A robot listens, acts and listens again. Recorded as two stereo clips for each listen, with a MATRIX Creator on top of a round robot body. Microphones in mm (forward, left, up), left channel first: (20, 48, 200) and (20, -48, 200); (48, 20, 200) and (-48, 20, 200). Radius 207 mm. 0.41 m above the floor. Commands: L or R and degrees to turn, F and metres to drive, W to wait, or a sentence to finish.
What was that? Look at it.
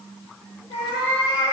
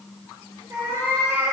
L120
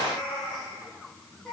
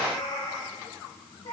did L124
Facing the cat meowing.